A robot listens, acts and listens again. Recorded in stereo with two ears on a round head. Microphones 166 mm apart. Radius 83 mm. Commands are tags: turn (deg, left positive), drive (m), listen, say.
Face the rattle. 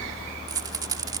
<turn deg="-20"/>
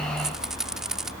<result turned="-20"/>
<say>Found it: a rattle, straight ahead.</say>